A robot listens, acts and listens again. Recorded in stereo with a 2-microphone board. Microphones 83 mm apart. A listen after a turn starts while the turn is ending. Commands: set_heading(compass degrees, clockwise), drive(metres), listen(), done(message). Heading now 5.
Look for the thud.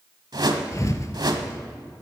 set_heading(325)
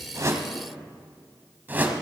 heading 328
listen()
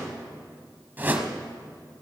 done("I heard a thud, but can't make it out now. It was about 5° left or 100° left.")